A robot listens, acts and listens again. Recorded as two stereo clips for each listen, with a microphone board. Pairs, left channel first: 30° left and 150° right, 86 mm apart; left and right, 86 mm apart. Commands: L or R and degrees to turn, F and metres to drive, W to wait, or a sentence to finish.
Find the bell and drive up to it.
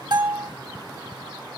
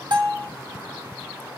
R120
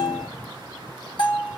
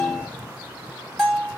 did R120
F1.0
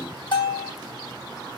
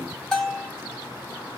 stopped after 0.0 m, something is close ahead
Something is in my way. I am facing the bell but have not reached it.